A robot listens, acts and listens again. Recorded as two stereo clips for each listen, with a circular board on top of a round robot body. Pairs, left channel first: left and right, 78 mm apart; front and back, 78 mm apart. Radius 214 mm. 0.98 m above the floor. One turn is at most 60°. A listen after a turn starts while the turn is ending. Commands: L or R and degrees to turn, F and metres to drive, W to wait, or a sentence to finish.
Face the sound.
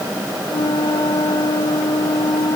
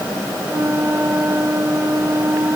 L60
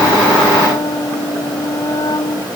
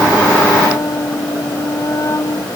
L55
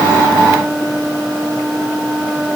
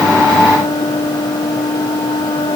Found it: a flute, straight ahead.